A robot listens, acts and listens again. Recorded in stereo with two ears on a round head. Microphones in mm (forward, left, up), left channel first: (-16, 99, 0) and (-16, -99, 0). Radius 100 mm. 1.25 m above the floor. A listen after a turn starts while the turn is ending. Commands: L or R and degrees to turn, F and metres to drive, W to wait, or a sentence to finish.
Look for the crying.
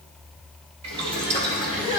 R65
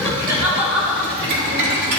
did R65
Facing the crying, 2 to 4 m away.